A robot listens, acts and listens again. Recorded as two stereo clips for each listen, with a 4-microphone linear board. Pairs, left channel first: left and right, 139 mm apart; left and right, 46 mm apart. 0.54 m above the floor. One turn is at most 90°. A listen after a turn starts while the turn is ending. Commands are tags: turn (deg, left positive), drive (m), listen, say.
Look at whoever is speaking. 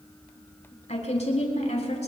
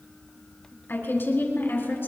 <turn deg="50"/>
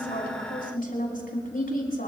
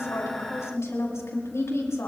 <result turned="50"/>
<turn deg="80"/>
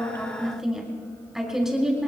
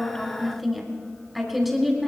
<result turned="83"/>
<say>Found it: a woman speaking, straight ahead.</say>